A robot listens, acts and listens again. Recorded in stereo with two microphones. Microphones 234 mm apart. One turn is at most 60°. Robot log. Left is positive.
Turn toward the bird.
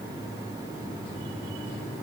cmd idle
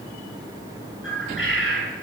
note: The bird: about 60° left or 120° left.
cmd yaw +60
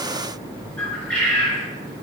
end: Found it: a bird, straight ahead, 2 to 4 m away.